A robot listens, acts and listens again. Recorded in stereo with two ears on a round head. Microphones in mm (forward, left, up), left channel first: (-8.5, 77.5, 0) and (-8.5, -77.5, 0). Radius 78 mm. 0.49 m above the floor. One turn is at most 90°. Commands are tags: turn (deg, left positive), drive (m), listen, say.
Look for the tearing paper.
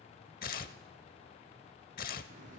<turn deg="50"/>
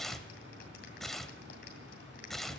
<say>Found it: tearing paper, straight ahead.</say>